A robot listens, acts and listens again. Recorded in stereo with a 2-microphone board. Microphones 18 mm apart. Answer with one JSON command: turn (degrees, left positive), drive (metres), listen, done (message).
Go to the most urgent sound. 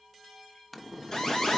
{"turn": 40}
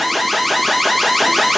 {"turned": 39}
{"drive": 1.0}
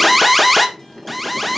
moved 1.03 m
{"drive": 1.0}
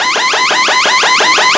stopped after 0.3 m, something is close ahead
{"done": "I am next to the alarm."}